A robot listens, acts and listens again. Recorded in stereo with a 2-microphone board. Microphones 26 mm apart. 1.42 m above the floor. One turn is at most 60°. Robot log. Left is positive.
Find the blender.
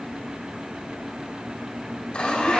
note: The blender: about 45° left or 135° left.
cmd yaw +45
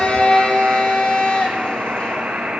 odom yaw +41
note: So it is at 85° left.
cmd yaw +60
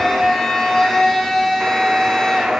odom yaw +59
note: The blender is now 25° left.
cmd yaw +25
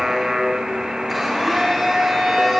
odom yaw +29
end: Found it: a blender, straight ahead, 2 to 4 m away.